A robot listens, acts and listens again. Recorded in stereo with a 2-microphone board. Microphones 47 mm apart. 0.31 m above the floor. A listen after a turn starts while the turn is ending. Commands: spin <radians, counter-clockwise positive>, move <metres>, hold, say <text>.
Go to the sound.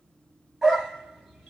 spin 0.52
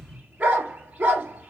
spin -0.52
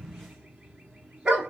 spin -0.17
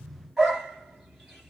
move 1.0
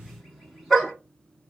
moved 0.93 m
move 1.0
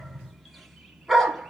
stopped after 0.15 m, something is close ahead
say Arrived at the dog barking, straight ahead.